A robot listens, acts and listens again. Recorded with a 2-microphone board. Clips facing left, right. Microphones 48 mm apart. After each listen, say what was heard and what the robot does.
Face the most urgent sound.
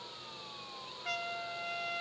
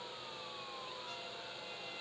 Keep listening.
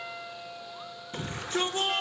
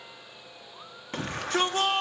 The shout: about 65° right or 115° right. Turn 65° right.
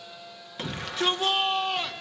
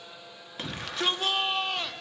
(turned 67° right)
Facing the shout.